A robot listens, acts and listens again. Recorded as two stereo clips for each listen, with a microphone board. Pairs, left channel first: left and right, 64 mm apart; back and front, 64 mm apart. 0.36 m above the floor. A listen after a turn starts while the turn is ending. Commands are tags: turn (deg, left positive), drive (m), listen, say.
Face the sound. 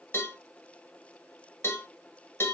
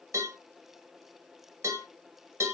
<turn deg="40"/>
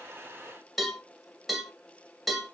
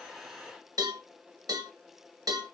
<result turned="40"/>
<say>Facing the cowbell.</say>